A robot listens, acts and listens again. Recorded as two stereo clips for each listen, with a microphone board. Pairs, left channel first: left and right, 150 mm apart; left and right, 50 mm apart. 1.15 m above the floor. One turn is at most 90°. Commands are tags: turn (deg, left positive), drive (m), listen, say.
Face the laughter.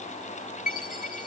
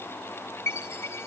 <listen/>
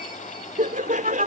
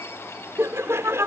<turn deg="-60"/>
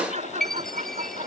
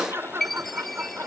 <turn deg="-50"/>
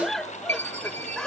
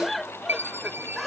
<say>Found it: laughter, straight ahead.</say>